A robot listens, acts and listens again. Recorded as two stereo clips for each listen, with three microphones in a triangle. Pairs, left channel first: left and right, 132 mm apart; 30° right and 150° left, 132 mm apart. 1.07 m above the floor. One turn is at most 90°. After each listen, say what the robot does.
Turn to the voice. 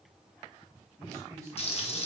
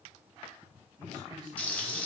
Turn 90° right.
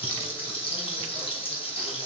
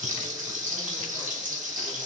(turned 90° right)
Turn 65° right.
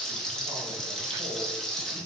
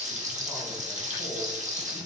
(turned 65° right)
Keep listening.
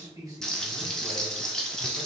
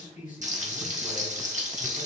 Turn 30° right.
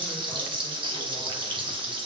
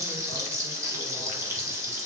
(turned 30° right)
Keep listening.
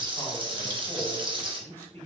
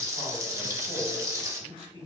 Turn 15° left.
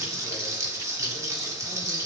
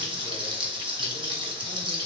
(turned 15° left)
Keep listening.
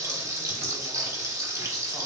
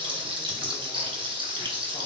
Keep listening.
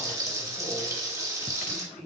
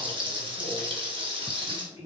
Facing the man speaking, 1 to 2 m away.